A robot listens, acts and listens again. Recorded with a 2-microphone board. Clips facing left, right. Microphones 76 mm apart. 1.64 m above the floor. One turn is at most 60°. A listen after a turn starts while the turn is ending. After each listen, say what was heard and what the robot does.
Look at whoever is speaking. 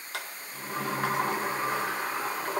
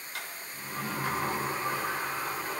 Keep listening.
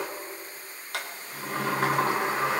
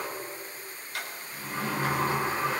Keep listening.
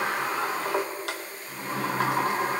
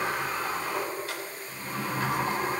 I can't make out anyone speaking, only a sliding door.